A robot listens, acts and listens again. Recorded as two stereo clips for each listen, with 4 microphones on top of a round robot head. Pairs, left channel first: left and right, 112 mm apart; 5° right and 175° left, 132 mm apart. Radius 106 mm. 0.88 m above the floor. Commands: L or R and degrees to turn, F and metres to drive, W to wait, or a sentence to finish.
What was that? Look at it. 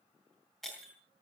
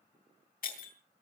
Found it: breaking glass, straight ahead.